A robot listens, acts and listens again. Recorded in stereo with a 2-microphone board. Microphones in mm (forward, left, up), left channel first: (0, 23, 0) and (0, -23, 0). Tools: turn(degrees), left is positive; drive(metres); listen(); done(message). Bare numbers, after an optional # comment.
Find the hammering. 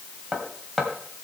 turn(-30)
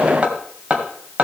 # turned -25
# So it is at 150° right.
turn(-150)
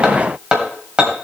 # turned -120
# The hammering is now 30° right.
turn(-30)
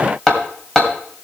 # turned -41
# The hammering is now 10° left.
turn(10)
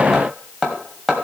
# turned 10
done("Facing the hammering, 2 to 4 m away.")